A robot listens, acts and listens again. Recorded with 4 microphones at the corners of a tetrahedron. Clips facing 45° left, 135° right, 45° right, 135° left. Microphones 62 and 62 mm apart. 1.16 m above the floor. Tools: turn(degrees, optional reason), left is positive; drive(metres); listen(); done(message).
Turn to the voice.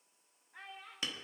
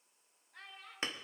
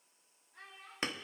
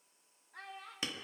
turn(degrees=130, reason="The child speaking: 130° left.")
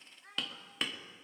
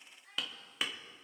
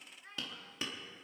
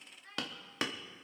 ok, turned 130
turn(degrees=20, reason="The child speaking is now 20° left.")
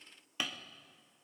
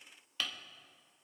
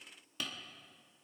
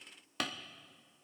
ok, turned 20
listen()
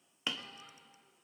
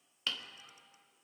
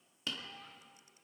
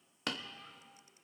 turn(degrees=20, reason="The child speaking is now 20° left.")
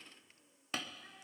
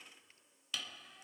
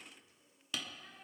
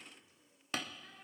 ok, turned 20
listen()
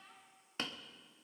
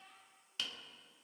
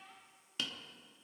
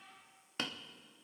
done("Facing the child speaking.")